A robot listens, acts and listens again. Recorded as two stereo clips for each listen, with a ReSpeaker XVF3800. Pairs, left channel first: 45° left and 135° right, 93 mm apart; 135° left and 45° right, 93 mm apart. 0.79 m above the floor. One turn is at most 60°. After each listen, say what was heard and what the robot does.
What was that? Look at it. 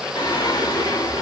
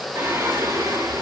Found it: singing, straight ahead, 1 to 2 m away.